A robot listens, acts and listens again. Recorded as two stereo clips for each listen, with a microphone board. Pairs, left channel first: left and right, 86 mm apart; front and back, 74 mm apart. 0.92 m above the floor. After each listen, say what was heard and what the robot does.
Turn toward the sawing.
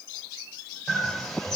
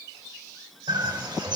Keep listening.
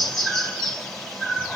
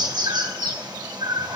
Keep listening.
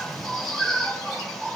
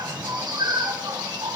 I can't make out sawing to turn to.